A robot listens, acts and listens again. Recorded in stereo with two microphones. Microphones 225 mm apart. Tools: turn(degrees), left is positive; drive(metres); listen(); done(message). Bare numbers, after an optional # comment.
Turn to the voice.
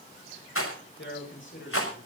# The man speaking: about 55° left or 125° left.
turn(55)
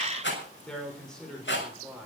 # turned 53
done("Facing the man speaking.")